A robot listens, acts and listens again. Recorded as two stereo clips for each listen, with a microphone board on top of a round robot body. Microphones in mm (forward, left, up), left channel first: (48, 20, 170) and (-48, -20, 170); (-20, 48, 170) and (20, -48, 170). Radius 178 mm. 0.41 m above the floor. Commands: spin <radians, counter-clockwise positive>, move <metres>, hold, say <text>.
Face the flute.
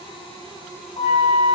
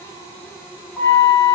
spin 0.61
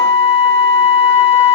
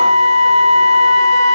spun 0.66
say Facing the flute.